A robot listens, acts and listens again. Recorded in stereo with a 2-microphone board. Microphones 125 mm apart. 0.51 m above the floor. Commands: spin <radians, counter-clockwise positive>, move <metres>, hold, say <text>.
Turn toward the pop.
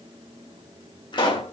spin 0.70
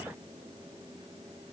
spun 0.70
hold
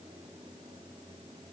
say I heard a pop, but can't make it out now. It was about straight ahead or 100° left.